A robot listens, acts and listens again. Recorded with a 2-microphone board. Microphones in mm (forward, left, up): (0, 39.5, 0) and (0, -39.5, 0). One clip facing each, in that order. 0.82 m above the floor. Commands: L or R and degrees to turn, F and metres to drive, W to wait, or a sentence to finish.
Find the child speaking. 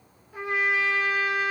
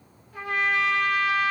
W
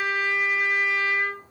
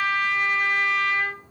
W
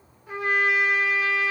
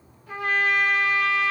I can't make out a child speaking, only a trumpet.